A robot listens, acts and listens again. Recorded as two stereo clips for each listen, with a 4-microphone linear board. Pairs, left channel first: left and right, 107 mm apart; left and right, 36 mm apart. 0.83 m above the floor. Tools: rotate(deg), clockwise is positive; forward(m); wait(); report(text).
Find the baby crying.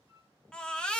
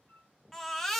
rotate(-30)
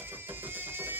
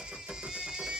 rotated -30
rotate(20)
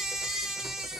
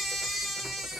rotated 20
report("Facing the baby crying, under 1 m away.")